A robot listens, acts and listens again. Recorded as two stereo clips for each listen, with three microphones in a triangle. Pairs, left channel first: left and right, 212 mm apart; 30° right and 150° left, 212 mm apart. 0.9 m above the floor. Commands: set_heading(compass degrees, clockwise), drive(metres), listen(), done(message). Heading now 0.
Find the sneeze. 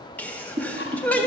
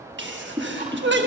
set_heading(190)
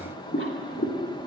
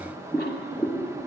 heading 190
done("I heard a sneeze from this way, but can't make it out now.")